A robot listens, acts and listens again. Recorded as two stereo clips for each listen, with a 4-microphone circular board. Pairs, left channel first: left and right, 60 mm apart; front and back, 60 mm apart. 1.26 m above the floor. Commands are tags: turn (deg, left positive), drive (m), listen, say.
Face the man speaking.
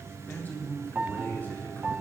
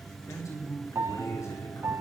<turn deg="35"/>
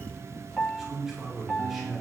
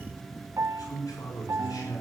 <say>Found it: a man speaking, straight ahead.</say>